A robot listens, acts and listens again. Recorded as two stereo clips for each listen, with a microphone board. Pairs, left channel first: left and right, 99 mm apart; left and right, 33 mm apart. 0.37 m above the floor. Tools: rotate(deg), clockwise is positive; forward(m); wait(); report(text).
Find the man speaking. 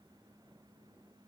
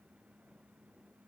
wait()
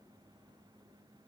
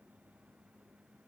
wait()
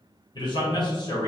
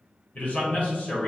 rotate(-45)
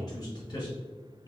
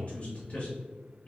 rotate(-45)
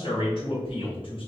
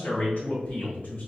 rotate(-55)
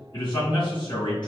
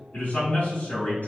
rotate(-40)
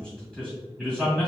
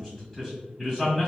report("Facing the man speaking.")